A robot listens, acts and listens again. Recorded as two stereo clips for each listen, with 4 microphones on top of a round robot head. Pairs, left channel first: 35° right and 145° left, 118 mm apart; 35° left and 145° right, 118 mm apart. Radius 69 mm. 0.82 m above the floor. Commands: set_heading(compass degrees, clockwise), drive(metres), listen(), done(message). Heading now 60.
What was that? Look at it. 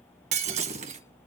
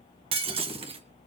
set_heading(245)
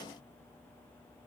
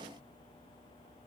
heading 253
done("Facing where the breaking glass came from. I can't hear it now.")